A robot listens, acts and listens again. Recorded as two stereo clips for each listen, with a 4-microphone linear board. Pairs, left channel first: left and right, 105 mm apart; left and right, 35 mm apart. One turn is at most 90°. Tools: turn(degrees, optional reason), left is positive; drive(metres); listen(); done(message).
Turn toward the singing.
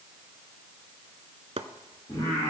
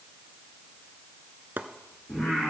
turn(degrees=40, reason="The singing: about 40° left or 140° left.")
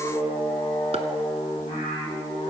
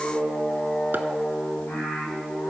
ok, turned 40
turn(degrees=90, reason="So it is at 90° left.")
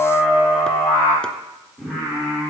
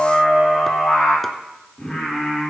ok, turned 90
done("Found it: singing, straight ahead, over 4 m away.")